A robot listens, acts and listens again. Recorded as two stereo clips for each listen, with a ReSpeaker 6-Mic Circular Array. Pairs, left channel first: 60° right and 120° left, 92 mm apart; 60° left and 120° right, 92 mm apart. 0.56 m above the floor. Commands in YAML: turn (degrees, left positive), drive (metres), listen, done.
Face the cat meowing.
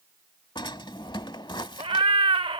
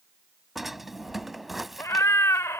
turn: 115
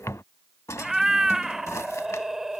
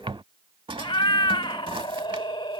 turn: 35
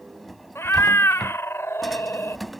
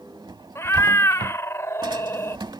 done: "Facing the cat meowing."